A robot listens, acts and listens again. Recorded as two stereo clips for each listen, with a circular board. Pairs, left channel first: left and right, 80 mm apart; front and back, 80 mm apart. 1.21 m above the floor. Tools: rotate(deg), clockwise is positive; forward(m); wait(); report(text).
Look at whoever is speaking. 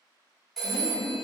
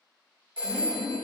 rotate(-55)
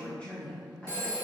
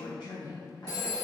rotate(-15)
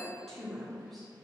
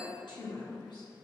report("Facing the woman speaking, under 1 m away.")